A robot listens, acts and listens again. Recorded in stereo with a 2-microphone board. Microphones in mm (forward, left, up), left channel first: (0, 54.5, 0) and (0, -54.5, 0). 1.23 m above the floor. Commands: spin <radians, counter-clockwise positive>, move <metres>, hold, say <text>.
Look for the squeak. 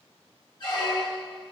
spin 0.79
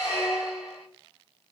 spin 1.48
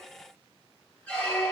spin 0.17
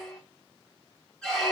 say Facing the squeak, 1 to 2 m away.